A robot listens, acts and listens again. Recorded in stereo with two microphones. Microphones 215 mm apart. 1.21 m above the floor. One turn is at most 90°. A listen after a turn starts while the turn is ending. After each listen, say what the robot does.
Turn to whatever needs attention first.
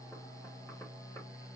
Keep listening.
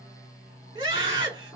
Turn 20° right.
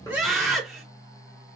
Found it: a scream, straight ahead.